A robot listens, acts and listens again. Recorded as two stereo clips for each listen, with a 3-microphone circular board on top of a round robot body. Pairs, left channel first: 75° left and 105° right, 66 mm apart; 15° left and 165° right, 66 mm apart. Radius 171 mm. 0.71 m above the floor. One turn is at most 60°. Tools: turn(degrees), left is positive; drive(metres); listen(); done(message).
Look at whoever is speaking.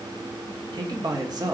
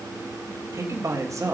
turn(degrees=-60)
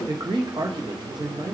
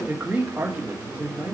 turn(degrees=-60)
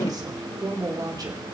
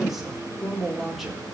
turn(degrees=-60)
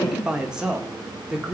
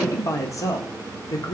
turn(degrees=-25)
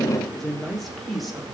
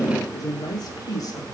turn(degrees=-10)
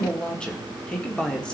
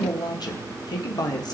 done("Facing the man speaking.")